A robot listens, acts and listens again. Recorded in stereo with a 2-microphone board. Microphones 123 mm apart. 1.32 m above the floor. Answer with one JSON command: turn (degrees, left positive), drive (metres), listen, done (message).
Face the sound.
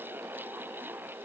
{"listen": true}
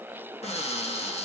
{"turn": 55}
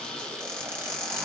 {"turn": 10}
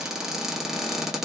{"done": "Facing the cupboard door, 1 to 2 m away."}